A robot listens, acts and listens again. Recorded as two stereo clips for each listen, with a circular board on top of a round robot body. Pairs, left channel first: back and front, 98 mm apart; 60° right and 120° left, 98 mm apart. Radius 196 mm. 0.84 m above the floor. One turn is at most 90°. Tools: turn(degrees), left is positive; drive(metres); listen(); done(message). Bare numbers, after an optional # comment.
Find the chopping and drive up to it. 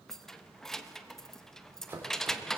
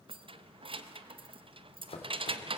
# The chopping: 70° right.
turn(-70)
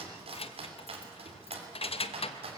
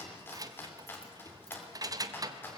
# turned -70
drive(1.0)
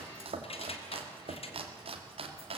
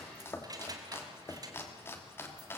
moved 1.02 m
drive(1.0)
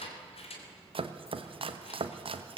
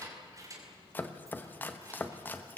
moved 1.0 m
# The chopping is now 10° left.
turn(10)
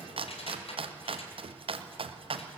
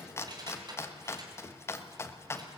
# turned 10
drive(1.0)
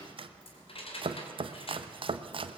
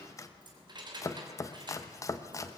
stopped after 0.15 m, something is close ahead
# The chopping is now 10° right.
turn(-10)
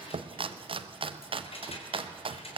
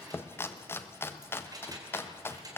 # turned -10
done("Arrived at the chopping, straight ahead.")